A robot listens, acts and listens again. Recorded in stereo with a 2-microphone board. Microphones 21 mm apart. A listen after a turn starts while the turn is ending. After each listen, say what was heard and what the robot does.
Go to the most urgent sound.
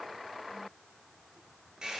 Keep listening.
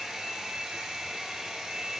Keep listening.
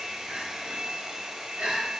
Turn 90° right.
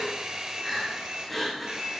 Drive 1.0 m forward.
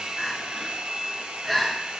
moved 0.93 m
Drive 1.0 m forward.
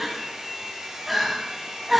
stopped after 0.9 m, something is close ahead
I am next to the crying.